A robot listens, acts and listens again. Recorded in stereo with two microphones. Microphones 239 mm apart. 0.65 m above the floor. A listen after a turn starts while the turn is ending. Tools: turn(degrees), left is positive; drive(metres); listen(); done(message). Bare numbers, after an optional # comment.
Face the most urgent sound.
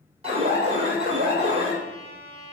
# The alarm: about 25° right or 155° right.
turn(-25)
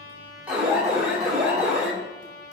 done("Facing the alarm.")